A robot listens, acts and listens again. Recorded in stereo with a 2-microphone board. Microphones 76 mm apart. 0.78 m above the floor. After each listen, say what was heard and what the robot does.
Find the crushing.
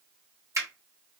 Keep listening.
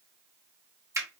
Keep listening.
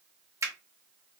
I can't make out crushing to turn to.